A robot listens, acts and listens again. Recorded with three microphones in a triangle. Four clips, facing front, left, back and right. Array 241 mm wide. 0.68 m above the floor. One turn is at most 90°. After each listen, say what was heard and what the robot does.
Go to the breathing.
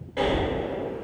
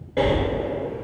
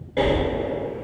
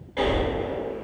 The breathing: 125° left. Turn 90° left.
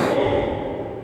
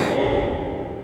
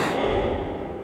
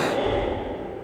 The breathing is now 10° left. Turn 10° left.
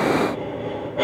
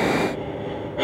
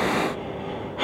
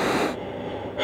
Drive 1.0 m forward.
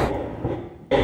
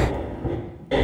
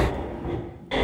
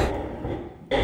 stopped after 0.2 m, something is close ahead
Something is in my way. I am facing the breathing but have not reached it.